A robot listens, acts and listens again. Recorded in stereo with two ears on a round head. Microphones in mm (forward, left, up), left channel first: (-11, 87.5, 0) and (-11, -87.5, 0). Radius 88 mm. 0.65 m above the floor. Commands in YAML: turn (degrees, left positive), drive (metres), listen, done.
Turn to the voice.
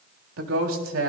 turn: -90
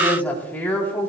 turn: 10
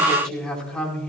done: "Found it: a woman speaking, straight ahead, over 4 m away."